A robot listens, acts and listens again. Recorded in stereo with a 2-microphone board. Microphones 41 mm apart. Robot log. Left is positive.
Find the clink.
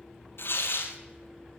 cmd idle
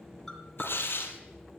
cmd yaw +30
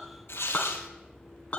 note: So it is at 145° left.
cmd yaw +145
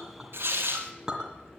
note: The clink is now 15° right.
cmd yaw -15
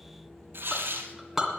end: Facing the clink, 2 to 4 m away.